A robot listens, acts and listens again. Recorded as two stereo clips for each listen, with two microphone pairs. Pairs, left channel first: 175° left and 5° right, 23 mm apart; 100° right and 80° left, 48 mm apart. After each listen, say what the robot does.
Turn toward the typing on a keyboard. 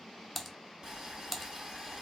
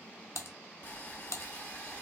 Turn 100° right.
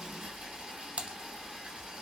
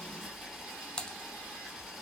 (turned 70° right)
Turn 30° right.
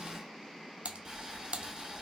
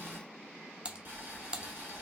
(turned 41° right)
Turn 10° left.
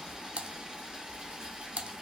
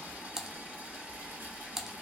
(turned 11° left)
Facing the typing on a keyboard.